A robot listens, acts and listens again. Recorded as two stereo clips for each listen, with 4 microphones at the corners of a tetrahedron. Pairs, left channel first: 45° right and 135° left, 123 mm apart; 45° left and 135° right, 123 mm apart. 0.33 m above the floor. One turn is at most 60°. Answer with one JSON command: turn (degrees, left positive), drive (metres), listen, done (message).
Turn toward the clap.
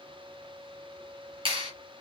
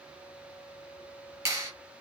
{"turn": 60}
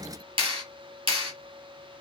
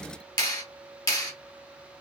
{"turn": 60}
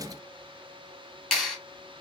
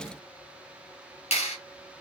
{"turn": 40}
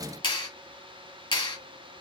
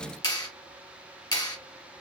{"done": "Facing the clap, 1 to 2 m away."}